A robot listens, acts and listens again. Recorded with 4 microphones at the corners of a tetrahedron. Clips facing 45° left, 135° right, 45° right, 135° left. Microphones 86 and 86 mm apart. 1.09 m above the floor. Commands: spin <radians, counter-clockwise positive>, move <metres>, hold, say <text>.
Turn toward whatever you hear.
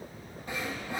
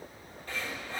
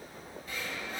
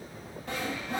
spin 2.01
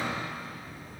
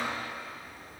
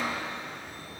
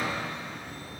say Facing the sawing, 2 to 4 m away.